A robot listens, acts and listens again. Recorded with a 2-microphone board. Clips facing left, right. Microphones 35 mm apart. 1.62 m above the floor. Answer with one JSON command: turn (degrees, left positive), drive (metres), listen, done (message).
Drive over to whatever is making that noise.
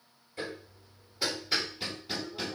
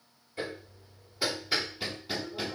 {"turn": -30}
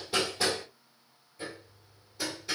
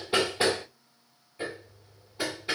{"turn": -140}
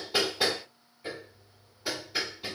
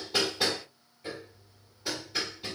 {"turn": 10}
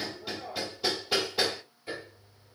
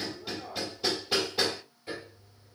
{"drive": 1.0}
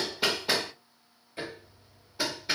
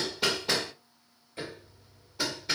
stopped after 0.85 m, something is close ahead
{"turn": 15}
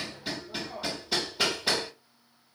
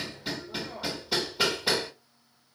{"done": "Arrived at the hammering, straight ahead."}